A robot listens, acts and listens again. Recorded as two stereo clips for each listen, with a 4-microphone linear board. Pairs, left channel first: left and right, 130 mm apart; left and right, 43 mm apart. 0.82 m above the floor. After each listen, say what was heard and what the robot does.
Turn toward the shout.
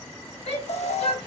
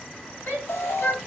The shout: about 60° left or 120° left. Turn 60° left.
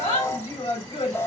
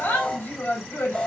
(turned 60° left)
So it is at 65° left. Turn 65° left.
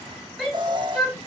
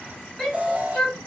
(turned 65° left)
Facing the shout.